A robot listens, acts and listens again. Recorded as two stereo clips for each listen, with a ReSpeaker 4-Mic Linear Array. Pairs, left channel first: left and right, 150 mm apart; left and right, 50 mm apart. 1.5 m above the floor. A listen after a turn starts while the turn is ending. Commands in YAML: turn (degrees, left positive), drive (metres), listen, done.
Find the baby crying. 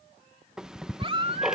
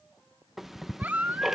turn: -40
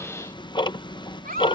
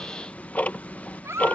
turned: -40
turn: -100
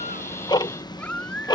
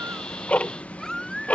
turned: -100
turn: 10
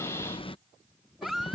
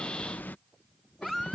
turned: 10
done: "Facing the baby crying."